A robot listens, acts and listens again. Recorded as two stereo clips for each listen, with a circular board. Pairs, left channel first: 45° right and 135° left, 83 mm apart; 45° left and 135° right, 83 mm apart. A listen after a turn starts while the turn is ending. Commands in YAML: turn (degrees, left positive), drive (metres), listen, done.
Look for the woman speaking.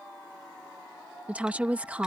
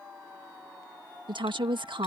turn: -150
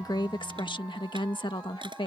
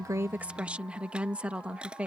turn: -60
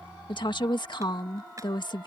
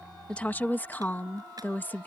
turn: -20
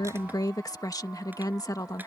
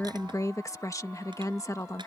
done: "Facing the woman speaking."